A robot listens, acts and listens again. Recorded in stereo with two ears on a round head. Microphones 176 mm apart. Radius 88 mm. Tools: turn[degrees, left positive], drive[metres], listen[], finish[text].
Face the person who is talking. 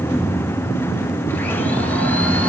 Action: listen[]
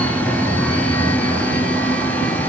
Action: listen[]
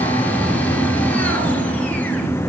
Action: finish[I can't make out anyone speaking to turn to.]